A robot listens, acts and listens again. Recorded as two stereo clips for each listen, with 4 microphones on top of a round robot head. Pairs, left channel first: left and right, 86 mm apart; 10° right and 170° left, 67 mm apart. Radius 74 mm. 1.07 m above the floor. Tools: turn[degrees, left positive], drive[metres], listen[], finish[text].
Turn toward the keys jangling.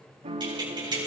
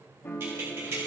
Thought: The keys jangling: 130° right.
Action: turn[-130]
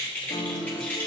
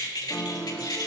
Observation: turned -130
Thought: The keys jangling is now 15° left.
Action: turn[15]
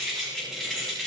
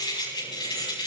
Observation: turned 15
Action: finish[Facing the keys jangling.]